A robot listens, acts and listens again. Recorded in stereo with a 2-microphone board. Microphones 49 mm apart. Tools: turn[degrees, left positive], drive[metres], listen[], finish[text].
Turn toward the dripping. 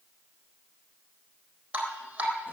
Thought: The dripping: about 25° right or 155° right.
Action: turn[-25]
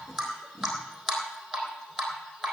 Action: finish[Found it: dripping, straight ahead.]